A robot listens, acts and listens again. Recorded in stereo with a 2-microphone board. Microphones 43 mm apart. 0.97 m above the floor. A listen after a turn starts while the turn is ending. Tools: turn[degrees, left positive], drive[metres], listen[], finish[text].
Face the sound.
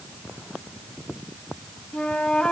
Thought: The flute: about 25° left or 155° left.
Action: turn[25]
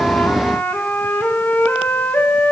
Thought: So it is at 125° left.
Action: turn[125]
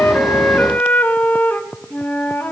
Thought: The flute is now 45° left.
Action: turn[45]
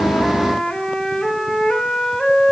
Thought: The flute is now 10° left.
Action: turn[10]
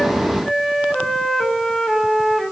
Action: finish[Facing the flute, 1 to 2 m away.]